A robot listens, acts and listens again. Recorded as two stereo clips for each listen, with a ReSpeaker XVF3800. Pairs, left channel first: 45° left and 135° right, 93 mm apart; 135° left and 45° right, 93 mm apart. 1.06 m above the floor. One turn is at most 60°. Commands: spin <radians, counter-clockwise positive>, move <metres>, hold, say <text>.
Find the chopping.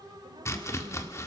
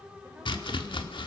spin 1.05
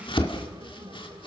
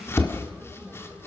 spin 1.05
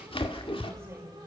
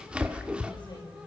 spin 0.52
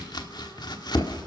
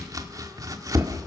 say Facing the chopping, 1 to 2 m away.